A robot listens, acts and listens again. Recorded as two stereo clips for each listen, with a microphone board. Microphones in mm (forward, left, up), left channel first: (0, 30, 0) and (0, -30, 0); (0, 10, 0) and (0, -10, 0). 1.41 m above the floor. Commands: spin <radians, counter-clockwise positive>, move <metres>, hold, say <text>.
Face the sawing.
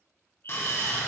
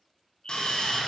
spin 0.70
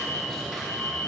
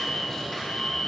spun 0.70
say Facing the sawing.